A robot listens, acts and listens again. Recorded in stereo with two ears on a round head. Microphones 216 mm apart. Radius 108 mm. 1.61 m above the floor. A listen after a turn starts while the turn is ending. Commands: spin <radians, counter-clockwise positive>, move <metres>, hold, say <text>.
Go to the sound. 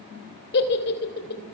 spin 0.79
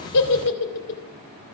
spin 1.40
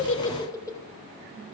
spin 0.26
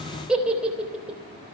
move 1.0
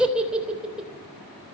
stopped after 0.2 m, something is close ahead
say Something is in my way. I am facing the giggle but have not reached it.